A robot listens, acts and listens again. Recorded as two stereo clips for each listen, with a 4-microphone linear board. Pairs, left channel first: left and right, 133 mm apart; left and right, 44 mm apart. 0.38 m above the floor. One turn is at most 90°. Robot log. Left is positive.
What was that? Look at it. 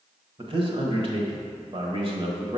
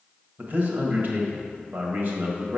note: The man speaking: about 50° right or 130° right.
cmd yaw -50
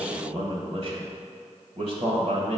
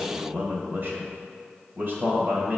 note: So it is at 70° right.
cmd yaw -70
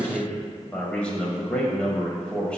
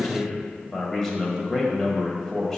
note: The man speaking is now 10° left.
cmd yaw +10
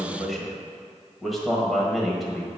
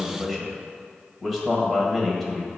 end: Facing the man speaking.